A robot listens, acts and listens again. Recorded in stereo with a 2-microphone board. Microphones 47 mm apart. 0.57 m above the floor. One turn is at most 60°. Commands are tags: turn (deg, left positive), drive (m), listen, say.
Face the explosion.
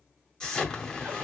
<turn deg="30"/>
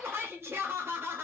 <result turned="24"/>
<listen/>
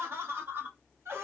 <say>I heard an explosion, but can't make it out now. It was about 10° right or 145° left.</say>